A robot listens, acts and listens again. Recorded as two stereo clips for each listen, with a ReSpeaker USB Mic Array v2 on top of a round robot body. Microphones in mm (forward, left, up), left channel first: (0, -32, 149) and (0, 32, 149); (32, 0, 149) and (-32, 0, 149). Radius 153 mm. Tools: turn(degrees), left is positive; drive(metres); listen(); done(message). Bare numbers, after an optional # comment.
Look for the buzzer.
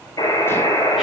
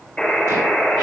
# The buzzer: 85° right.
turn(-85)
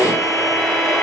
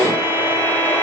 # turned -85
listen()
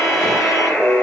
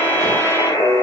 # The buzzer is now 20° right.
turn(-20)
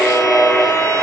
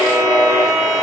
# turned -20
done("Facing the buzzer, over 4 m away.")